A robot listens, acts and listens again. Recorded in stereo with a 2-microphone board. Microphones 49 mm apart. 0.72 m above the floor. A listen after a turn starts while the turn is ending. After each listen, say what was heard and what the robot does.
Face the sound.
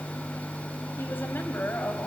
The woman speaking: about 40° left or 140° left. Turn 40° left.
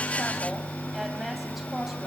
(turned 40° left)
Found it: a woman speaking, straight ahead, over 4 m away.